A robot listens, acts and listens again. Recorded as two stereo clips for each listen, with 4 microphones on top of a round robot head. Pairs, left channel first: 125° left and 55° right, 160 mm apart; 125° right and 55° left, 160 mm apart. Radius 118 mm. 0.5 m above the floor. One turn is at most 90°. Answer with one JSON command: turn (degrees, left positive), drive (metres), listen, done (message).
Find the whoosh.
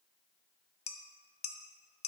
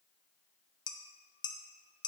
{"listen": true}
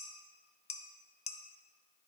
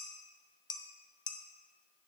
{"listen": true}
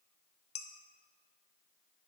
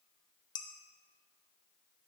{"done": "I can't make out a whoosh to turn to."}